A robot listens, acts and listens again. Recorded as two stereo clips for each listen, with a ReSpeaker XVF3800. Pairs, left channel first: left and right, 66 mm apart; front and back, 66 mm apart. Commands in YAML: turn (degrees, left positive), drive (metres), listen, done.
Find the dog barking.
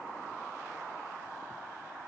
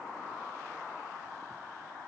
listen: true
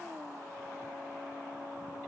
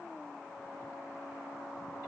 listen: true
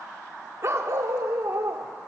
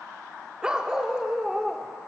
turn: -90
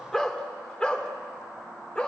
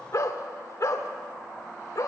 turn: 20
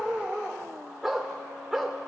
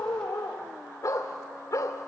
done: "Found it: a dog barking, straight ahead, 2 to 4 m away."